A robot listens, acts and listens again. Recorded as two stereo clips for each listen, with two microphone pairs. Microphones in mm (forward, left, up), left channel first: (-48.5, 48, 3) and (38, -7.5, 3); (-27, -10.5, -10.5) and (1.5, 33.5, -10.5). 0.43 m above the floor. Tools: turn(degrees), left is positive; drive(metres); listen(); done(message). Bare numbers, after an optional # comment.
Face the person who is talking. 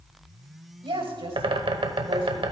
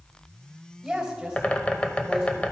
# The woman speaking: 25° right.
turn(-25)
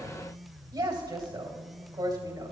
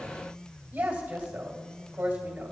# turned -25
done("Facing the woman speaking.")